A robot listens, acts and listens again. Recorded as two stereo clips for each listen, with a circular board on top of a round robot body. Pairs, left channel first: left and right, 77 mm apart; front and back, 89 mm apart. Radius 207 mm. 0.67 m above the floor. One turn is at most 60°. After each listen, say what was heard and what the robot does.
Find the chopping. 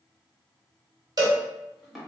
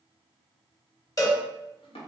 Found it: chopping, straight ahead.